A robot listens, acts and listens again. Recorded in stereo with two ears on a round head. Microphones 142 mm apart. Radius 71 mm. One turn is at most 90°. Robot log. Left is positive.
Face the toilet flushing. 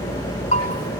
cmd idle
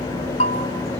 cmd idle
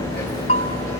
end: I can't make out a toilet flushing to turn to.